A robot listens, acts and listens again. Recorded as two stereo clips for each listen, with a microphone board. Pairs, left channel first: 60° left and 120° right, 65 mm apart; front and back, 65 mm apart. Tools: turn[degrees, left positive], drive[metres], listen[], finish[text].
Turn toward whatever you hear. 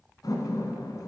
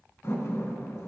Thought: The door slam: 45° left.
Action: turn[45]
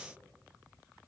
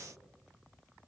Action: finish[Facing where the door slam came from. I can't hear it now.]